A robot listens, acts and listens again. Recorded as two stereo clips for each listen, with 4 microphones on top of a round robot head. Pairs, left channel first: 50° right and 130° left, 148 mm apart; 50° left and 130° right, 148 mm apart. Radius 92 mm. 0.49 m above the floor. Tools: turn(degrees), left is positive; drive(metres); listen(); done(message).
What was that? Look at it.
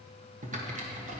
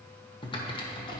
turn(degrees=105)
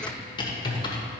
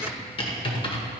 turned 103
done("Found it: typing on a keyboard, straight ahead, 1 to 2 m away.")